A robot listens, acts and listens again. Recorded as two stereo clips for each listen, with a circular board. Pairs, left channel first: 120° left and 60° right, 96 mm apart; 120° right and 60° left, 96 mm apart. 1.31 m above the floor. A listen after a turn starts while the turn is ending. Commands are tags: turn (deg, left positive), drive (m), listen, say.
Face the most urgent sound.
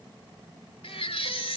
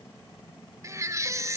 <turn deg="115"/>
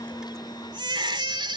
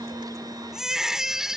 <turn deg="-25"/>
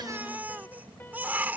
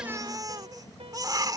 <turn deg="10"/>
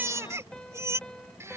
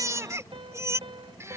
<say>Facing the baby crying.</say>